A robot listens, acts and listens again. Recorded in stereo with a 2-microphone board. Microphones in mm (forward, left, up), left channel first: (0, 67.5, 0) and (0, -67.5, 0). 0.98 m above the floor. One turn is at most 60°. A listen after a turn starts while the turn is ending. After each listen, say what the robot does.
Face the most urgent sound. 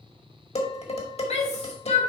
Turn 50° left.
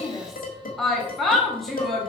Facing the shout, 2 to 4 m away.